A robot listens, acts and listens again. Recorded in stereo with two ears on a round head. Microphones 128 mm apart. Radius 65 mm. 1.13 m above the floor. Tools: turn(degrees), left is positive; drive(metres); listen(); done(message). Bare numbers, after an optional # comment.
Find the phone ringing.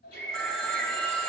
turn(30)
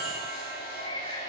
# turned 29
listen()
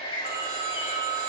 # So it is at 25° right.
turn(-25)
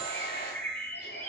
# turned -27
listen()
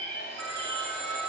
done("Found it: a phone ringing, straight ahead, 2 to 4 m away.")